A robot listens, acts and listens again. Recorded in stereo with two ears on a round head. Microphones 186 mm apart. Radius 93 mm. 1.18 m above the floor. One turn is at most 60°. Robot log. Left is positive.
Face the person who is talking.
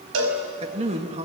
note: The man speaking: about 30° right or 150° right.
cmd yaw -30
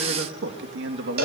note: So it is at 120° right.
cmd yaw -60
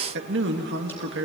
note: The man speaking is now 60° right.
cmd yaw -60
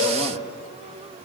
cmd idle
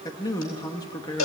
note: The man speaking is now 20° left.
cmd yaw +20
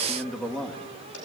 end: Facing the man speaking, 2 to 4 m away.